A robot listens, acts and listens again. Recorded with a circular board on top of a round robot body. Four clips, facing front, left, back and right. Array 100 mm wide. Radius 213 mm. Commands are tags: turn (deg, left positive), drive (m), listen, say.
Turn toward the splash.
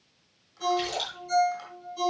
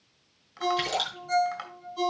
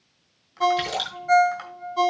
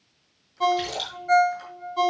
<turn deg="155"/>
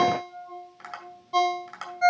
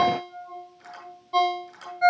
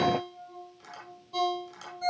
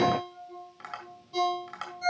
<say>I heard a splash from this way, but can't make it out now.</say>